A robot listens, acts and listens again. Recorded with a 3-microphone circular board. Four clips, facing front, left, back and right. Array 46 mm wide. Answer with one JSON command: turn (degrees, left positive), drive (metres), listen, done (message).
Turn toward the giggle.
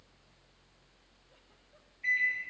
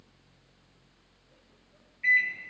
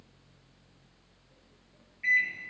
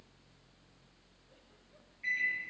{"listen": true}
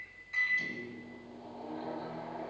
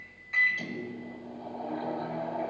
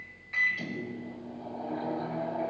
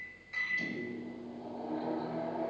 {"listen": true}
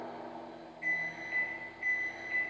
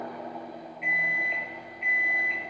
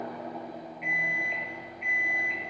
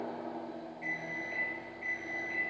{"done": "I can't make out a giggle to turn to."}